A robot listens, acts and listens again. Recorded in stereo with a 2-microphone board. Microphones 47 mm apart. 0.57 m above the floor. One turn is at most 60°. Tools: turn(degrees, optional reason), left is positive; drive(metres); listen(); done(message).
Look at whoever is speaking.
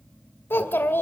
turn(degrees=55, reason="The child speaking: about 55° left or 125° left.")
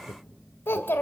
turn(degrees=60, reason="So it is at 65° left.")
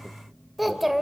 done("Facing the child speaking, 1 to 2 m away.")